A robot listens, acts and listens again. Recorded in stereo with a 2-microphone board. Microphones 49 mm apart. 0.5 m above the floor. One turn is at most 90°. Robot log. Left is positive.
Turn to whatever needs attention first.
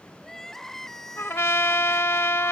cmd yaw +30
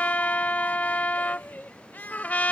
note: So it is at 140° left.
cmd yaw +90
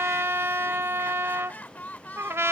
note: The crying is now 40° left.
cmd yaw +40
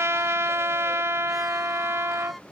cmd idle
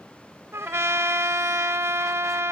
cmd idle
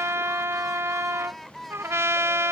end: Facing the crying.